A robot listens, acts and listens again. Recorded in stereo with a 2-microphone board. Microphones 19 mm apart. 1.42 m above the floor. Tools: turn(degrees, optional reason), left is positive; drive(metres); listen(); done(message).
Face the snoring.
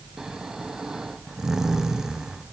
turn(degrees=-35, reason="The snoring: about 35° right or 145° right.")
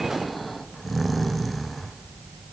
done("Facing the snoring.")